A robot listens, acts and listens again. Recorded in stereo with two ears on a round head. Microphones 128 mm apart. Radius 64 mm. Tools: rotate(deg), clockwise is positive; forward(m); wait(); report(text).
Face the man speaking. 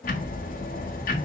wait()
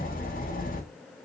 wait()
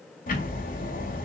report("I can't make out a man speaking, only ticking.")